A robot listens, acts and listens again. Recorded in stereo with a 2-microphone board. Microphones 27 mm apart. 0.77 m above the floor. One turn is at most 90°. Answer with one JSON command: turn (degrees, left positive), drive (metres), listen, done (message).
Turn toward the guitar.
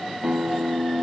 {"turn": -35}
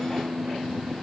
{"done": "Facing the guitar."}